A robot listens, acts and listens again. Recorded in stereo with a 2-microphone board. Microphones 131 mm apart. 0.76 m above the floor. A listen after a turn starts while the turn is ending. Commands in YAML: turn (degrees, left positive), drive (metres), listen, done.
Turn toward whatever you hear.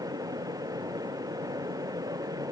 listen: true
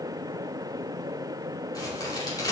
turn: 30
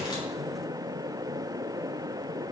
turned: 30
listen: true
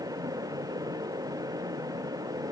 done: "I heard a crack, but can't make it out now. It was about straight ahead or 120° left."